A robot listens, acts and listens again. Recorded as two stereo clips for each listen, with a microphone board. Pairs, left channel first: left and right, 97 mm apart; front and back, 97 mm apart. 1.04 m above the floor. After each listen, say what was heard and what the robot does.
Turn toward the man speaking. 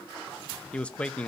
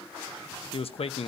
The man speaking: 10° left. Turn 10° left.
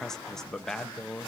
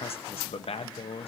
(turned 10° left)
Facing the man speaking.